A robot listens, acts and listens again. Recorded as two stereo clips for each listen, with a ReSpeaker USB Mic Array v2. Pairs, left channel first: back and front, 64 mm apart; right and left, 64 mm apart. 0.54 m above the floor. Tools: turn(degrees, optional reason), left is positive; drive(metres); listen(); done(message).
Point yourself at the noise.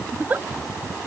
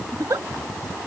turn(degrees=60, reason="The giggle: 60° left.")
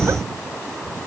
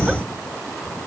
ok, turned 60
listen()
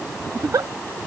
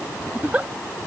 turn(degrees=25, reason="The giggle is now 25° left.")
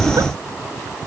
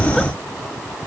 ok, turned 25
listen()
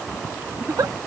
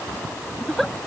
done("Facing the giggle.")